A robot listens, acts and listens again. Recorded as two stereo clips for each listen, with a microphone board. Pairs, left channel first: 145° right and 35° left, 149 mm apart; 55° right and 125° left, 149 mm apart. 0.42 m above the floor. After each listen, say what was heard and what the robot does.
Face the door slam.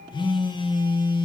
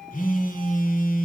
Keep listening.
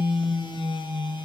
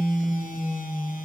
Keep listening.
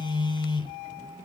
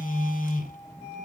I can't make out a door slam to turn to.